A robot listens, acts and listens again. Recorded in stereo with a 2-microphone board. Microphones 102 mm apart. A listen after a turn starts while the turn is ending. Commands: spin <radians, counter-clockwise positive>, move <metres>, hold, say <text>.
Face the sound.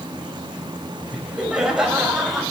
spin 0.52
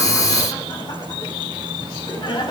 spin 2.36
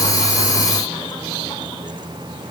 hold
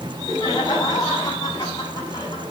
spin 0.70
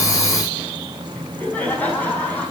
spin 0.26
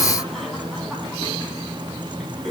say Facing the laughter, over 4 m away.